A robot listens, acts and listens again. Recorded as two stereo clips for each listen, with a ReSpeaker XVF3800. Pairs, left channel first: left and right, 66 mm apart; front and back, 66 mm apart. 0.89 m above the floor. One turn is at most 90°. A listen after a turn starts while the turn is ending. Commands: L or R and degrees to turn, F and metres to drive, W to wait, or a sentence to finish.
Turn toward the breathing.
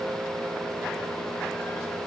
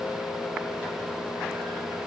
W
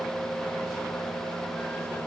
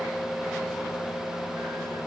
W
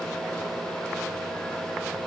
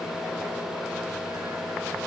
I can't make out breathing.